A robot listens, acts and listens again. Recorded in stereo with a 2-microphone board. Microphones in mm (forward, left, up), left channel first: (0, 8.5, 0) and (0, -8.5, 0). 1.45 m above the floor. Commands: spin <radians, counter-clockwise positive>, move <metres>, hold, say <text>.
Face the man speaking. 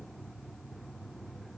hold
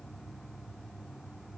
hold
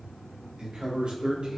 spin -1.57
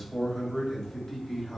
spin 0.35
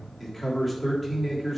say Found it: a man speaking, straight ahead, 2 to 4 m away.